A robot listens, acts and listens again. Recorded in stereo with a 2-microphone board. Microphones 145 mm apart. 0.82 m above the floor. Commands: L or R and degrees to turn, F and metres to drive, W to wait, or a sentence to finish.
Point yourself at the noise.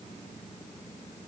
W
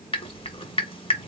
L40
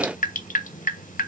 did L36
L105
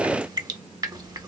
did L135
R30
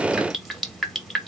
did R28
Found it: dripping, straight ahead.